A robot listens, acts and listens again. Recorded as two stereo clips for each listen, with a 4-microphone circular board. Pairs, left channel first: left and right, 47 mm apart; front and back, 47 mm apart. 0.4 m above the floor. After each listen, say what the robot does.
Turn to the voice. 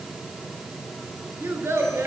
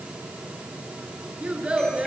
Turn 110° right.
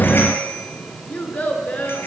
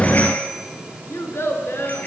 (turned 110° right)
Turn 35° left.
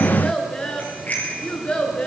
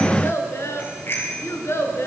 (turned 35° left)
Turn 25° left.
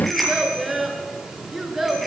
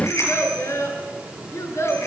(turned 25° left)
Turn 10° right.
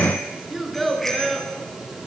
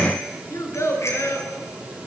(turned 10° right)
Facing the child speaking, over 4 m away.